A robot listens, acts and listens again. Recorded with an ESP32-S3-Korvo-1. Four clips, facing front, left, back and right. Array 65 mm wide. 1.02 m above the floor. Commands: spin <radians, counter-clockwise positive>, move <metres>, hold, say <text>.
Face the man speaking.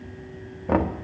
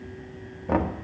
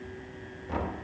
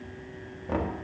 hold
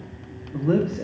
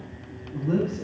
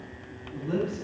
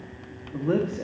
spin -0.87
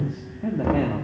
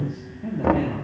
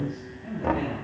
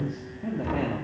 spin -0.26
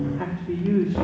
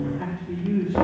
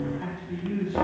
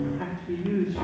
spin -0.26
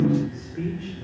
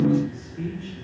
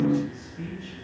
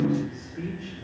spin -0.26
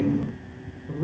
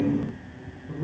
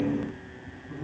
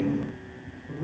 say Facing the man speaking, 2 to 4 m away.